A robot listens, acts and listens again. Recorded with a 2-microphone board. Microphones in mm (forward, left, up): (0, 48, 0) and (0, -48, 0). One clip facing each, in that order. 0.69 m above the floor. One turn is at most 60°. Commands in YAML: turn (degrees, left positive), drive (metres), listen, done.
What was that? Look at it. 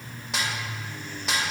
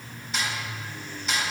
turn: 60
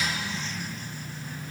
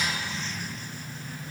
turn: 30
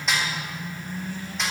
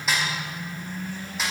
done: "Facing the snare drum."